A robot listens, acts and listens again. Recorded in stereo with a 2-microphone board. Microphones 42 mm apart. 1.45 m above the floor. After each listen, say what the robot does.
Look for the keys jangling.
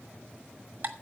Keep listening.
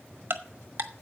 Keep listening.
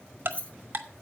Turn 35° left.
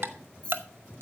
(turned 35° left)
Turn 25° left.
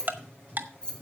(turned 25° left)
Turn 20° left.
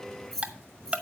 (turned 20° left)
Turn 10° left.
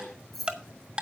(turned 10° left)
Found it: keys jangling, straight ahead, 2 to 4 m away.